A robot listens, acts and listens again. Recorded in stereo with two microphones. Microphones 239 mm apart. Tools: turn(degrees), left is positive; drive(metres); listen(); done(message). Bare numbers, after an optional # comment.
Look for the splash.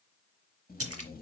# The splash: about 70° right or 110° right.
turn(-70)
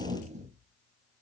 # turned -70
listen()
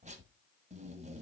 done("I heard a splash, but can't make it out now. It was about straight ahead or 40° right.")